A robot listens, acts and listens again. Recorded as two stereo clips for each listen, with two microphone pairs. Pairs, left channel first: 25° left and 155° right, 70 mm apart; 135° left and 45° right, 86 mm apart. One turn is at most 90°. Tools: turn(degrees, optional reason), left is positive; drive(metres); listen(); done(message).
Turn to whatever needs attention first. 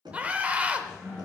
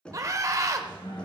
turn(degrees=-90, reason="The scream: 90° right.")
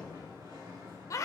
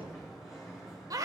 turn(degrees=-10, reason="The scream is now 10° right.")
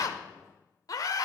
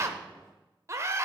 done("Facing the scream, 1 to 2 m away.")